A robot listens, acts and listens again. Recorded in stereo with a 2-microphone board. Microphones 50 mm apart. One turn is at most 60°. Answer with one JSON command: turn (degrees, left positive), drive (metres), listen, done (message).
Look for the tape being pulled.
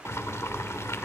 {"listen": true}
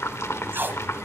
{"turn": -45}
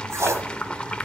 {"turn": -60}
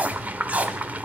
{"turn": -35}
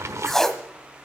{"turn": 10}
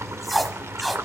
{"done": "Found it: tape being pulled, straight ahead."}